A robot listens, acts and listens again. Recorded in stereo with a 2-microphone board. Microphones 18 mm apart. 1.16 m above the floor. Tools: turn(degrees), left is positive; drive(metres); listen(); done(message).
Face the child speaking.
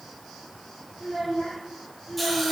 turn(degrees=55)
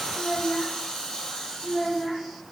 turn(degrees=25)
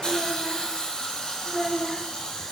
turn(degrees=30)
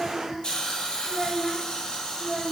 done("Facing the child speaking.")